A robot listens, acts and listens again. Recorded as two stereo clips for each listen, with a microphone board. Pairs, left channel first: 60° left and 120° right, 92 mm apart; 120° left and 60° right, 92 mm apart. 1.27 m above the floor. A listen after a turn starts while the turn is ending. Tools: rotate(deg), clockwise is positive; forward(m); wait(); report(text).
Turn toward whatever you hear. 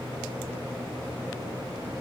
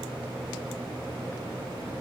wait()
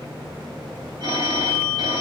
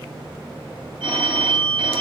rotate(85)
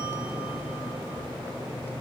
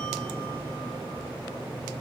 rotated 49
rotate(40)
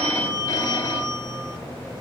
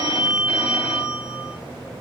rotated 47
rotate(-10)
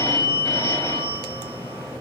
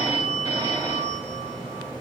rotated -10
report("Facing the phone ringing, over 4 m away.")